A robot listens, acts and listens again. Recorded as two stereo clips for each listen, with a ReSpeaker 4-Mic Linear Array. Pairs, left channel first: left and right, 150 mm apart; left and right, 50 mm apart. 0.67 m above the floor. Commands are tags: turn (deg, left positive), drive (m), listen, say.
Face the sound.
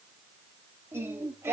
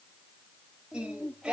<turn deg="-20"/>
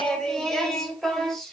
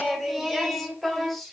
<turn deg="30"/>
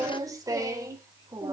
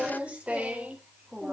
<turn deg="-25"/>
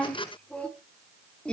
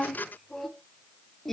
<say>Found it: singing, straight ahead.</say>